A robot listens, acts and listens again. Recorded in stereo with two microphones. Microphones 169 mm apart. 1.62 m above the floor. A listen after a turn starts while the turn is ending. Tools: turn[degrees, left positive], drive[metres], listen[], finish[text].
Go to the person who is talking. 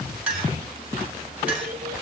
Action: listen[]
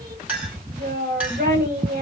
Thought: The child speaking: about 65° right or 115° right.
Action: turn[-65]
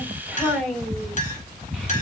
Action: drive[1.0]
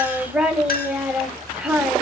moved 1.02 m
Thought: The child speaking is now 10° right.
Action: turn[-10]
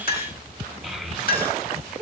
Action: drive[1.0]
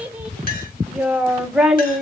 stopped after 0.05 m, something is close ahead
Action: finish[Arrived at the child speaking, straight ahead.]